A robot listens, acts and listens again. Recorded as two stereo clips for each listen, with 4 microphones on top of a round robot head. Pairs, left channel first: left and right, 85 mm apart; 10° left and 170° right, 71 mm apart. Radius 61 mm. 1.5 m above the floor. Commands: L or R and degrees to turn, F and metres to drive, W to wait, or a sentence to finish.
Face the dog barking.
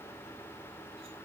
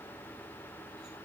W
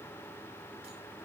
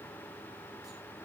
W
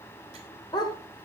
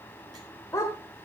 L55
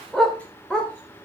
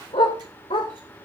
L10
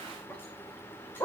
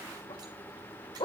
L25
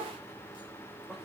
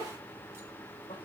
W
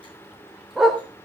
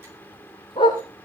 Facing the dog barking.